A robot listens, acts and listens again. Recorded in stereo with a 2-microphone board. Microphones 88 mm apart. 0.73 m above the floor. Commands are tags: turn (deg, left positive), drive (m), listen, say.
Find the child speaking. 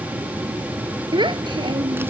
<turn deg="-60"/>
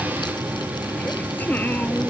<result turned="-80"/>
<listen/>
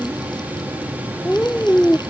<turn deg="20"/>
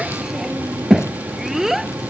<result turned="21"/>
<say>Facing the child speaking.</say>